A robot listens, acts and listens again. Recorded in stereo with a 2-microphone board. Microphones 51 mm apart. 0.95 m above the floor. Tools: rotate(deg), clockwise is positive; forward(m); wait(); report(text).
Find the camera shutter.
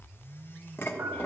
wait()
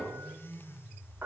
wait()
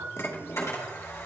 rotate(-65)
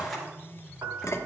report("Found it: a camera shutter, straight ahead.")